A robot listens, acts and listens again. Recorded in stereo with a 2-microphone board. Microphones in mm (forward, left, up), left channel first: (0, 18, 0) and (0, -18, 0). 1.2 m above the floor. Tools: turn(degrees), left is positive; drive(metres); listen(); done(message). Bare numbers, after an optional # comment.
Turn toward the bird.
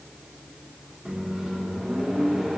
listen()
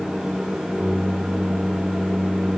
listen()
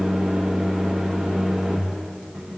done("I can't make out a bird, only a microwave.")